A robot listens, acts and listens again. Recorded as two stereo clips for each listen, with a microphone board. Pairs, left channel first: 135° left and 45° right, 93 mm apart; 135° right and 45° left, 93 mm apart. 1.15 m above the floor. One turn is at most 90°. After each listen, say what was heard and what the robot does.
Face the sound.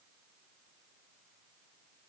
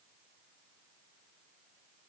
Keep listening.
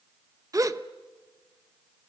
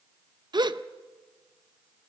Facing the gasp.